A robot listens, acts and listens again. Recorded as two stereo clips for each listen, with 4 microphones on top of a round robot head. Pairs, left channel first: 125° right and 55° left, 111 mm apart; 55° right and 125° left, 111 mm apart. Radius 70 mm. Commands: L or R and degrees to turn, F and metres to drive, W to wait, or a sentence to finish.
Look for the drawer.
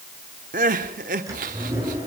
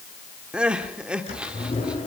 R10
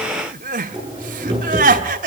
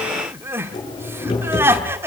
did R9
Found it: a drawer, straight ahead.